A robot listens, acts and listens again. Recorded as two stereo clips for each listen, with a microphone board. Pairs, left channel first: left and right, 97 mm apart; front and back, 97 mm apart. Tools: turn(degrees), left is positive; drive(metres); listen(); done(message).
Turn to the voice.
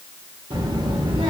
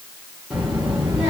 turn(degrees=-100)
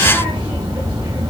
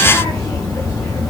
turn(degrees=-45)
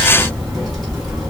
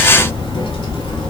done("Facing the child speaking.")